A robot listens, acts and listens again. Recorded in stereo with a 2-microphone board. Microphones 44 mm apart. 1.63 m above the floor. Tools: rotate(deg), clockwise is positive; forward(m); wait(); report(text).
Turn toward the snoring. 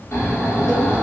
rotate(-90)
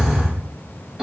rotate(10)
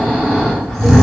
report("Facing the snoring, 1 to 2 m away.")